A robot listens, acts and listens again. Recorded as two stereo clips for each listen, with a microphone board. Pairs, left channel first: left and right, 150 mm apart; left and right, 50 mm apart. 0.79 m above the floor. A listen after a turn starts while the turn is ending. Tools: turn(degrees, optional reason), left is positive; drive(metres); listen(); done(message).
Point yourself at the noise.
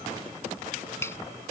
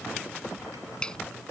turn(degrees=15, reason="The finger snap: about 15° left or 165° left.")
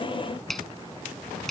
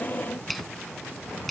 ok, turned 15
done("Found it: a finger snap, straight ahead.")